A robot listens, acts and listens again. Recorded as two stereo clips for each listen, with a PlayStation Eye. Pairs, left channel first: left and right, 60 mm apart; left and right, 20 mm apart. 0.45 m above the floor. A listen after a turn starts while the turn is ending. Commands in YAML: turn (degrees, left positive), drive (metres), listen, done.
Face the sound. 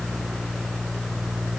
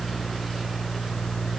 listen: true
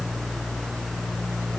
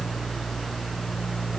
listen: true
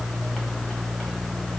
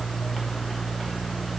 done: "I can't make out anything."